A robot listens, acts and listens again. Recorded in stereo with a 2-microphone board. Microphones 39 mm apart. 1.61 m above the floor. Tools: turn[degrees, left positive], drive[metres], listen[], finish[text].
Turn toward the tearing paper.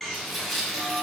Action: turn[30]
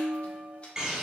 Action: listen[]
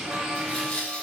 Thought: So it is at 150° left.
Action: turn[150]
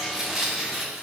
Thought: The tearing paper is now 10° right.
Action: turn[-10]
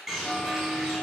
Action: listen[]
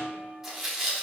Action: finish[Found it: tearing paper, straight ahead, 1 to 2 m away.]